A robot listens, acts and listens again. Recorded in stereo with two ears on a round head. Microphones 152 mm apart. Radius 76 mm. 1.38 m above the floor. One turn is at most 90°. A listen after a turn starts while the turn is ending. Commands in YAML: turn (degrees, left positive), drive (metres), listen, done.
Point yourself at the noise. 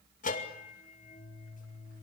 turn: 50
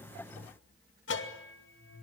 turn: 80
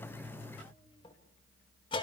turn: 30
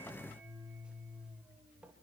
done: "Found it: a bell, straight ahead, 2 to 4 m away."